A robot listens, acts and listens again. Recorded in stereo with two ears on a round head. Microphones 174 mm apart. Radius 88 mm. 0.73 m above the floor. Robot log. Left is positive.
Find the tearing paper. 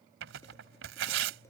note: The tearing paper: about 75° right or 105° right.
cmd yaw -75
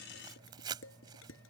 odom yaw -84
note: So it is at 20° right.
cmd yaw -20
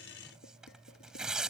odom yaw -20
end: Found it: tearing paper, straight ahead.